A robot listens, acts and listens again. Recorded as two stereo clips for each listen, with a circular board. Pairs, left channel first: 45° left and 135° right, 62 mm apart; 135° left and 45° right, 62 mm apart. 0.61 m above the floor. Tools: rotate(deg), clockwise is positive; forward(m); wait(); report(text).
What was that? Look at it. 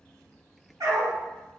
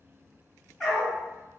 rotate(135)
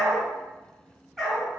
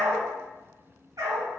rotate(40)
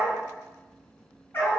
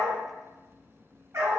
report("Found it: a dog barking, straight ahead, 1 to 2 m away.")